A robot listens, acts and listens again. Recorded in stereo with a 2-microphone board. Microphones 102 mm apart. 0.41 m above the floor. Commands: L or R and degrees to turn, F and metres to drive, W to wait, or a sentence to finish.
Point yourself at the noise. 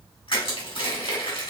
L60
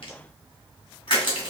L55
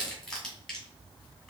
Found it: crushing, straight ahead, 2 to 4 m away.